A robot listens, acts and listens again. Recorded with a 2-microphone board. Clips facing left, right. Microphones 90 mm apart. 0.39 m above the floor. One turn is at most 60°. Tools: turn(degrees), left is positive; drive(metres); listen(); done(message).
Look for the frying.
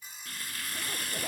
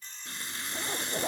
turn(degrees=-25)
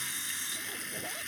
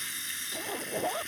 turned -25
done("Found it: frying, straight ahead.")